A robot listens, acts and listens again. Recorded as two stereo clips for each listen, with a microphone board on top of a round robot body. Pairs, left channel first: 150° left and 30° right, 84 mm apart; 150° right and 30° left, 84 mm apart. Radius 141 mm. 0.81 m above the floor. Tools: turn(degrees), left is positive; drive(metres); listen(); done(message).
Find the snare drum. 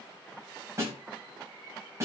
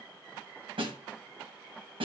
turn(degrees=25)
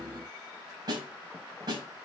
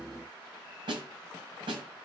turn(degrees=10)
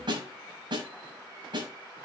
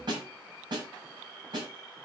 done("Facing the snare drum, over 4 m away.")